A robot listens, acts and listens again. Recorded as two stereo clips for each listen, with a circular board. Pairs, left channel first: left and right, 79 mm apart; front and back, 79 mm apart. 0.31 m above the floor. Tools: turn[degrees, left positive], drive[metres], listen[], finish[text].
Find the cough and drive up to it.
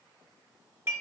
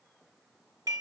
Action: listen[]
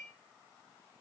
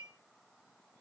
Action: listen[]
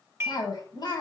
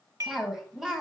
Thought: The cough: 95° left.
Action: turn[95]
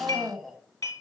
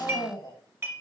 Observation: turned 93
Action: drive[1.0]
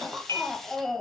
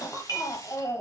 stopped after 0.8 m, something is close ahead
Action: finish[I am next to the cough.]